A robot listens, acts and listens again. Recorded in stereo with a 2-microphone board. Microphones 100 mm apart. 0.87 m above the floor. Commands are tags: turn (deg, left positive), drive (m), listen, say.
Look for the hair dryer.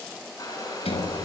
<turn deg="35"/>
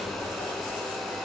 <say>Facing the hair dryer, over 4 m away.</say>